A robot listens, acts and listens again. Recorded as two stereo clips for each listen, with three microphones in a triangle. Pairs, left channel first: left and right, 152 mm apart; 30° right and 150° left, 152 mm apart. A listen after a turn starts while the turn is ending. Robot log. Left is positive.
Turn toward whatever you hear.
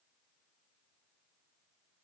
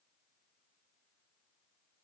cmd idle
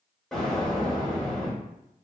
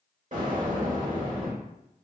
note: The explosion: 175° left.
cmd yaw +175
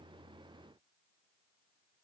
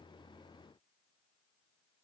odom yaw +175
end: Facing where the explosion came from. I can't hear it now.